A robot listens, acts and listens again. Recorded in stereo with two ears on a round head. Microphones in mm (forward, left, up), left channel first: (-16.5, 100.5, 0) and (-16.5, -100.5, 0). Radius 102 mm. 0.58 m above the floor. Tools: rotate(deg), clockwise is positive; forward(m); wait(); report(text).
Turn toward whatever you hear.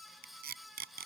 rotate(45)
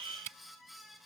rotate(85)
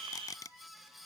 rotate(-15)
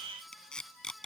report("Found it: tape being pulled, straight ahead.")